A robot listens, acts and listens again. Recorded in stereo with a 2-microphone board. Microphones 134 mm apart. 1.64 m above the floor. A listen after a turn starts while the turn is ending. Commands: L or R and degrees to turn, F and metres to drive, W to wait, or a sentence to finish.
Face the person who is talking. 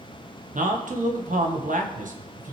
R75
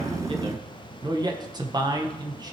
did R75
R30
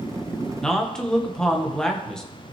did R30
Facing the man speaking.